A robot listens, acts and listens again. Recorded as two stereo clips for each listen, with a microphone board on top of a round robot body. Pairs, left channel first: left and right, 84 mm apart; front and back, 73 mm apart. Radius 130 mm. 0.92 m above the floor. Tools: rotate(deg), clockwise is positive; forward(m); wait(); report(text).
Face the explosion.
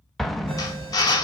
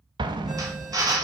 rotate(-175)
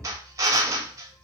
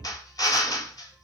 report("Facing where the explosion came from. I can't hear it now.")